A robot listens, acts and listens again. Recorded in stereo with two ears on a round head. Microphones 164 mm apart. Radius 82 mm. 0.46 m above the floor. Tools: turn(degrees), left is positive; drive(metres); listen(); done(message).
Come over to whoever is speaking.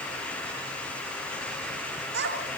turn(degrees=-65)
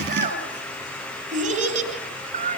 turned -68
turn(degrees=-40)
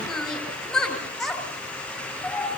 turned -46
drive(metres=1.0)
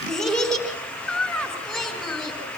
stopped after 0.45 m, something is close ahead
done("Something is in my way. I am facing the child speaking but have not reached it.")